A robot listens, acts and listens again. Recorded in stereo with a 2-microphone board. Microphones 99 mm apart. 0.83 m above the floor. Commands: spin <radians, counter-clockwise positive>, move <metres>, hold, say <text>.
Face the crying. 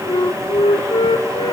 hold
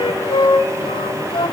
hold
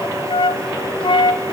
say I can't make out crying to turn to.